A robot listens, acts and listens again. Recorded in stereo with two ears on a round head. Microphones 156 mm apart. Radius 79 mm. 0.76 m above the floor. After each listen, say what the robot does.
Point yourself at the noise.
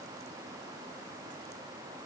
Keep listening.
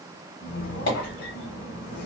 Turn 55° left.
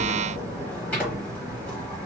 Turn 10° left.
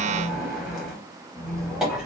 Found it: a squeak, straight ahead, under 1 m away.